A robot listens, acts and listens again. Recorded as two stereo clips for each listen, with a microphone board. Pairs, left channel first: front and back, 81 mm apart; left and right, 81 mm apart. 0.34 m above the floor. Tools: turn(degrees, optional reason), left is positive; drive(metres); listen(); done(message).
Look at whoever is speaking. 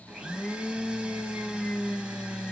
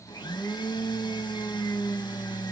listen()
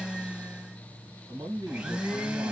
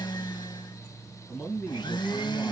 turn(degrees=155, reason="The man speaking: 155° left.")
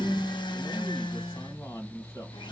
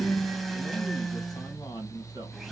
turn(degrees=60, reason="The man speaking is now 60° left.")
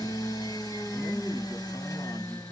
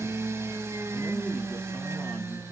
listen()
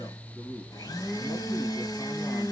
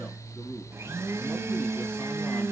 turn(degrees=20, reason="The man speaking is now 20° left.")
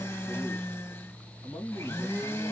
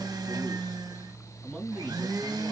done("Facing the man speaking.")